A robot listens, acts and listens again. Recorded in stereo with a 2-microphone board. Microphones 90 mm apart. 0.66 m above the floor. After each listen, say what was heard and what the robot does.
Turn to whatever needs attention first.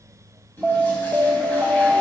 Turn 30° left.
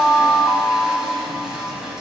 So it is at 145° left. Turn 145° left.
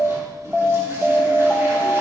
Found it: an alarm, straight ahead.